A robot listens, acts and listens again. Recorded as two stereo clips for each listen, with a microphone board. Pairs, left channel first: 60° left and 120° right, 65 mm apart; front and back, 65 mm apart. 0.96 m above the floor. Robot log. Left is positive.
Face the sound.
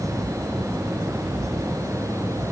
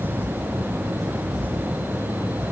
cmd idle
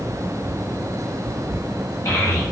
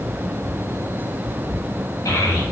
note: The child speaking: 30° left.
cmd yaw +30
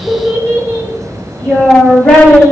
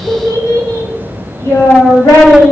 end: Found it: a child speaking, straight ahead, over 4 m away.